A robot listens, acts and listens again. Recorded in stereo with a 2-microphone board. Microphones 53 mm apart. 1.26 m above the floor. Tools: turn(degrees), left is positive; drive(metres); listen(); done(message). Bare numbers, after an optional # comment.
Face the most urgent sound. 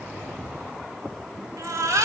turn(-90)
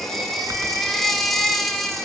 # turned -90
done("Facing the baby crying, 2 to 4 m away.")